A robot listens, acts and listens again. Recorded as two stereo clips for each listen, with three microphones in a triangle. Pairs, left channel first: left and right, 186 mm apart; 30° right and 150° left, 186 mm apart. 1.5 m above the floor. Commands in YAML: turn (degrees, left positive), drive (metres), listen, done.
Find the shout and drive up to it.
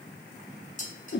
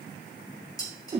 listen: true
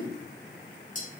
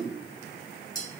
listen: true
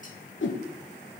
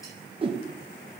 done: "I can't make out a shout to turn to."